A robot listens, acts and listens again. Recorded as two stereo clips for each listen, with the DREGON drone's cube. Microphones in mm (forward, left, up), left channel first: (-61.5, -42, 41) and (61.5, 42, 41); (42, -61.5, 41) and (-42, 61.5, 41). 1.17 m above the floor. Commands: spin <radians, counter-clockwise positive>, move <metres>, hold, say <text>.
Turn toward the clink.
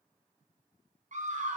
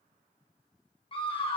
hold
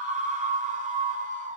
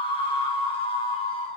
hold
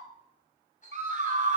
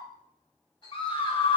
spin -1.92
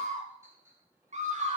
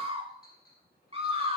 spin -0.61
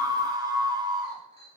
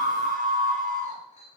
spin -0.26
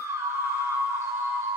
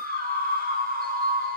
hold
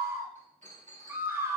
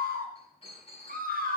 say Found it: a clink, straight ahead.